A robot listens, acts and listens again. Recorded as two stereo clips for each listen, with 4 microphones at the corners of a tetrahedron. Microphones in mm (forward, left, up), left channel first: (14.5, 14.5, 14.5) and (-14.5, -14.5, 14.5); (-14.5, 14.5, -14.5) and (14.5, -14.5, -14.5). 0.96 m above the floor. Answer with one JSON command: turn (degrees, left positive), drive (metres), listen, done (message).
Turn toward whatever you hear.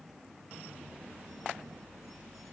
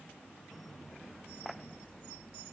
{"listen": true}
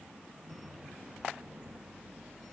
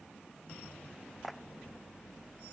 {"listen": true}
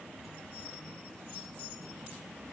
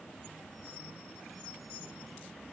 {"done": "I can't make out anything."}